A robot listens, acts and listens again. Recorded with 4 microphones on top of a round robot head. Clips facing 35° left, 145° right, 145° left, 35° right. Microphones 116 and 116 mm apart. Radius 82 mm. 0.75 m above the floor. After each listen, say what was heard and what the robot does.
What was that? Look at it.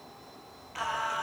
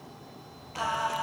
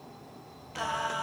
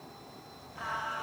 The singing: 150° left. Turn 150° left.
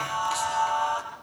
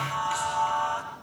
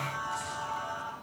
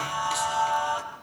The singing is now 30° right. Turn 30° right.
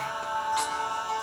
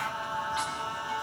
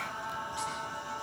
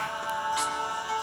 The singing is now 15° right. Turn 15° right.
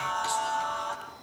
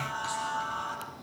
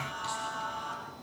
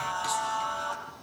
Found it: singing, straight ahead.